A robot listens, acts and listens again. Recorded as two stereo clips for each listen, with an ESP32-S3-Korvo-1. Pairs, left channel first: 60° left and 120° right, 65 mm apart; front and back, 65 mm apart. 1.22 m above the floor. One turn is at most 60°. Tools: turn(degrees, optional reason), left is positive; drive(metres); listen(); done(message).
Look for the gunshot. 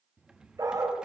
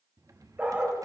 listen()
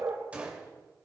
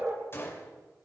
turn(degrees=-50, reason="The gunshot: 50° right.")
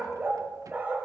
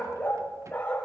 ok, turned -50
done("Facing where the gunshot came from. I can't hear it now.")